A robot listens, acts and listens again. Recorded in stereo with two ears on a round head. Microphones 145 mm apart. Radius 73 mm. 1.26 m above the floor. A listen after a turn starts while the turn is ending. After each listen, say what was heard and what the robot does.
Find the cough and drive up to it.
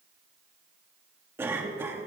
Turn 30° right.
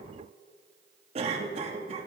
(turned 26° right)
So it is at 140° right. Turn 140° right.
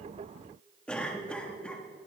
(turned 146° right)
Drive 1.0 m forward.
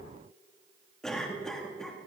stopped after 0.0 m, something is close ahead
Blocked. The cough is further on, straight ahead.